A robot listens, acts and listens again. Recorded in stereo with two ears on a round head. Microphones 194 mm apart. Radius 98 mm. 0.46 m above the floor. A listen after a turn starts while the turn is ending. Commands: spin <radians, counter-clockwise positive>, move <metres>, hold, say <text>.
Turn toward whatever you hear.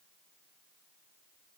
hold
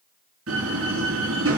spin -1.13
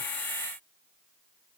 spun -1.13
hold
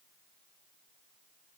say I heard a door slam, but can't make it out now. It was about straight ahead or 50° right.